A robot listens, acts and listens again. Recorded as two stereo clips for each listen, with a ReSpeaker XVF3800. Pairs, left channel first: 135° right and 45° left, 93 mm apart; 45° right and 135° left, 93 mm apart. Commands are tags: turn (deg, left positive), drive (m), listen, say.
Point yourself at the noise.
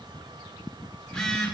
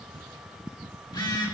<turn deg="-55"/>
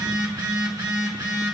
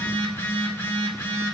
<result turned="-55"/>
<turn deg="15"/>
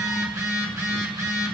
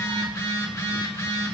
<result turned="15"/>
<say>Found it: a phone buzzing, straight ahead.</say>